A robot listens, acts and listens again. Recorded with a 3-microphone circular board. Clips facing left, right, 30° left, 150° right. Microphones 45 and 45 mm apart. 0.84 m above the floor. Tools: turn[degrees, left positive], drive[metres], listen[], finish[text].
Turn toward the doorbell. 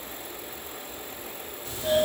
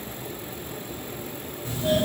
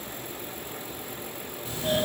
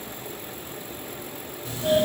Thought: The doorbell: 140° right.
Action: turn[-140]
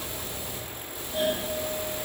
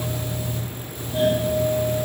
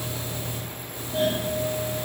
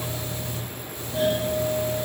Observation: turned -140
Action: finish[Facing the doorbell.]